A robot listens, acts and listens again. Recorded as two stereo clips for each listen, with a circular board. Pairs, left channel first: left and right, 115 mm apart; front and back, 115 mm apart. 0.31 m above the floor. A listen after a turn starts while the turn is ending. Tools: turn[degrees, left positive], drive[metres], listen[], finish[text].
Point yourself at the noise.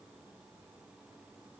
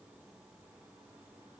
Action: listen[]
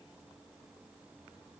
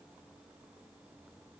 Action: listen[]
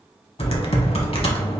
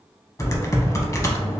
Thought: The typing on a keyboard: 60° left.
Action: turn[60]
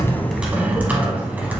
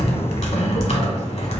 Thought: The typing on a keyboard is now 15° right.
Action: turn[-15]
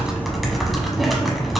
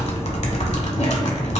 Action: finish[Found it: typing on a keyboard, straight ahead.]